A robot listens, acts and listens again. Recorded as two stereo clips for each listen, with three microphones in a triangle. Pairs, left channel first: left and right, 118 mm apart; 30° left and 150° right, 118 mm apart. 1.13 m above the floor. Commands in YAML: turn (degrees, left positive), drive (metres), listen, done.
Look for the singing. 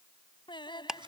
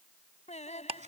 turn: 40
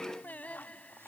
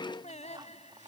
turn: 10
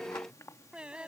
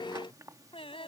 turn: -10
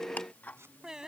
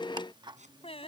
done: "Found it: singing, straight ahead."